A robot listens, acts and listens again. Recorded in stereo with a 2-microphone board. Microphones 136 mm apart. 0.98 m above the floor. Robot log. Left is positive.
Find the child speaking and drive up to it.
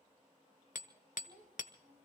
cmd yaw -90
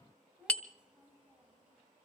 cmd fwd 1.0
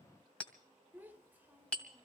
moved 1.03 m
note: The child speaking is now 15° right.
cmd yaw -15
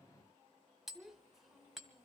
cmd fwd 1.0
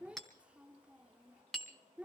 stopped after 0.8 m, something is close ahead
note: The child speaking is now 10° right.
cmd yaw -10
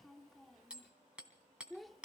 end: I am next to the child speaking.